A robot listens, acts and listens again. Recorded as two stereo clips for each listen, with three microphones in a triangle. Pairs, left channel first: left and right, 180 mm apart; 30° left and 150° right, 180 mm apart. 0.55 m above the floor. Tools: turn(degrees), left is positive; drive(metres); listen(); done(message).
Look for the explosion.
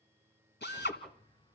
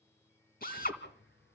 turn(degrees=25)
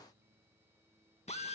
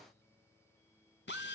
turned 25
done("I heard an explosion from this way, but can't make it out now.")